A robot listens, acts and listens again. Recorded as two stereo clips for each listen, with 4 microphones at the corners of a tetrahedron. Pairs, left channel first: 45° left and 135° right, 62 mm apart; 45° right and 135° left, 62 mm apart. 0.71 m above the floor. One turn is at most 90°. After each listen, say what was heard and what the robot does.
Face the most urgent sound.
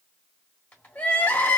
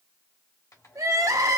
The crying: 110° left. Turn 90° left.
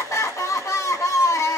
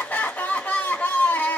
The crying is now 15° left. Turn 15° left.
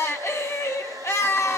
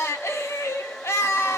Found it: crying, straight ahead, 1 to 2 m away.